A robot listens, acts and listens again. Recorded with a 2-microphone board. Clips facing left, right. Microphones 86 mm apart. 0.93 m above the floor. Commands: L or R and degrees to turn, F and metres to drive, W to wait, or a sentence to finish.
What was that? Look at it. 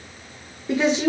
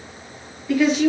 L25
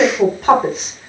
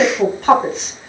Found it: a woman speaking, straight ahead, under 1 m away.